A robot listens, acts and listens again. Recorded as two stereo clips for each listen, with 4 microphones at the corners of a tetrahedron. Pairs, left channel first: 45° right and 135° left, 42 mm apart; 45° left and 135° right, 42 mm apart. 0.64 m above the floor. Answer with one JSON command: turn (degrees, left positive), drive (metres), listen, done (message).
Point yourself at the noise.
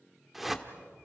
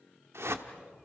{"turn": -140}
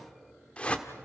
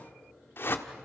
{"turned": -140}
{"turn": 20}
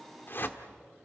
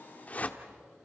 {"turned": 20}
{"turn": -10}
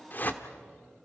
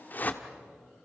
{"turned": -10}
{"done": "Facing the whoosh, 1 to 2 m away."}